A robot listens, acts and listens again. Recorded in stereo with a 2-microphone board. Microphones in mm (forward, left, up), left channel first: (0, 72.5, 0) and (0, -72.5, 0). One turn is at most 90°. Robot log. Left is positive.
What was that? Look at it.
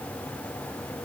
cmd idle
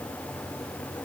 cmd idle
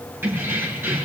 cmd yaw -30
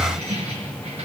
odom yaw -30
note: So it is at 135° right.
cmd yaw -90
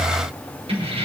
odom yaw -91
note: The keys jangling is now 40° right.
cmd yaw -40
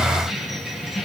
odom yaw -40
end: Found it: keys jangling, straight ahead.